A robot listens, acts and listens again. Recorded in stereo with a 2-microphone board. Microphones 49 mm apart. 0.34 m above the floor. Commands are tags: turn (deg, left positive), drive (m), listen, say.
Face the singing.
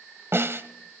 <listen/>
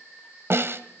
<listen/>
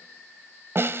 <say>I can't make out singing, only a snare drum.</say>